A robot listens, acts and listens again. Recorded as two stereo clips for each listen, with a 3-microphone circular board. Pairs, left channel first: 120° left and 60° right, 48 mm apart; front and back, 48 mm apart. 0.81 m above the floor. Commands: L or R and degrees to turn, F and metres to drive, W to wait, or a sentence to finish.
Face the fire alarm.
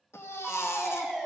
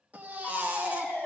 L25
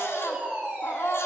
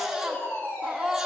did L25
Facing the fire alarm, 2 to 4 m away.